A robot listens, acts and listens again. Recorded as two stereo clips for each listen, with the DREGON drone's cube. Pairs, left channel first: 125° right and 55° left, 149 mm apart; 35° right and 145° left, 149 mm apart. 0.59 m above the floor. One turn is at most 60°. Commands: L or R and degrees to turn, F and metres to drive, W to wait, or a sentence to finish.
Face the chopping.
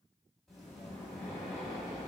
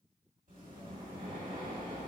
W
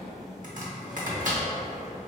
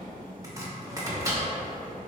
L60
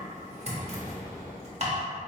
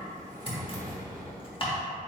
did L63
L15
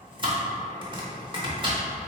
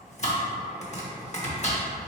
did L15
Found it: chopping, straight ahead, under 1 m away.